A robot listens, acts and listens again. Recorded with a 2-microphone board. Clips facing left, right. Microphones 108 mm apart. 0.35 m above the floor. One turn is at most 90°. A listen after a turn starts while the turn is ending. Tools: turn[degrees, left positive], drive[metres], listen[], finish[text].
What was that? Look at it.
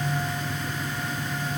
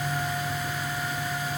Action: listen[]
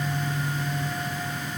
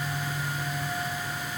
Action: listen[]
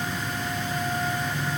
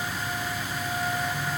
Action: finish[I can't make out anything to turn to.]